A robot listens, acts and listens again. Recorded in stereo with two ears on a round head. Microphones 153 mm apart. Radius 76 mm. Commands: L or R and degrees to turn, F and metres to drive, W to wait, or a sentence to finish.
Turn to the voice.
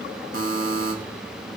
W
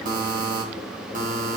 W
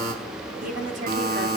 R45
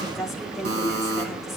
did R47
Found it: a woman speaking, straight ahead.